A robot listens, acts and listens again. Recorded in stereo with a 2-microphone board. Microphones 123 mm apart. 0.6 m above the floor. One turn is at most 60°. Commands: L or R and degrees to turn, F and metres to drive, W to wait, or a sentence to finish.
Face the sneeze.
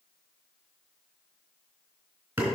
W
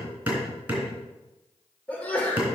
L30
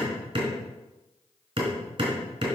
W
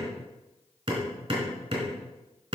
I heard a sneeze, but can't make it out now. It was about 15° right or 135° left.